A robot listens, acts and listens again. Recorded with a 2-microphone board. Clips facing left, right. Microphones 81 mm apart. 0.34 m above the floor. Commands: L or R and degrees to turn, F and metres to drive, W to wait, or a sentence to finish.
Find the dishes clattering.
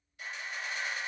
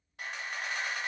W
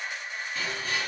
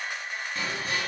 L30
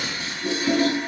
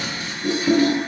L145
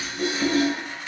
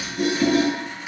R10
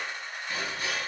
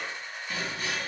Found it: dishes clattering, straight ahead.